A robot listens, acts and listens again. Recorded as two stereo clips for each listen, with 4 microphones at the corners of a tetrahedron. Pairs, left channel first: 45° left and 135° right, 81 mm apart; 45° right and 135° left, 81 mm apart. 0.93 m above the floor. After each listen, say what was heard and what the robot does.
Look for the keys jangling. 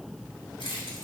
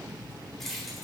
The keys jangling: 45° left. Turn 45° left.
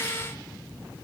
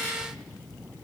Keep listening.
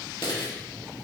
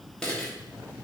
The keys jangling is now 40° left. Turn 40° left.
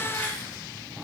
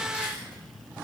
Keep listening.
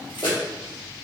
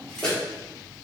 The keys jangling is now 35° left. Turn 35° left.
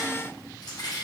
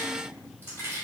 The keys jangling is now 15° left. Turn 15° left.
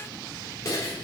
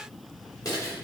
Found it: keys jangling, straight ahead, 2 to 4 m away.